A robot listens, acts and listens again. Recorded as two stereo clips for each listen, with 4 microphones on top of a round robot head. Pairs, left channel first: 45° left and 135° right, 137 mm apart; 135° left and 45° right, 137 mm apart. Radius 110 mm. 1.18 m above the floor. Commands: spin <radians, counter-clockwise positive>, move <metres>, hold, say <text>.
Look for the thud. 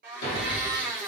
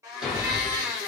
spin 0.79
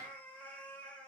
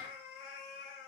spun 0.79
say I heard a thud from this way, but can't make it out now.